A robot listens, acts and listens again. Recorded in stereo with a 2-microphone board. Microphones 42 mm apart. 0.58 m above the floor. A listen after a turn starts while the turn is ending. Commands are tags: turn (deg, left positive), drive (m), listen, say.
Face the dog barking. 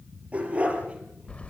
<turn deg="-30"/>
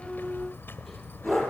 <say>Facing the dog barking, over 4 m away.</say>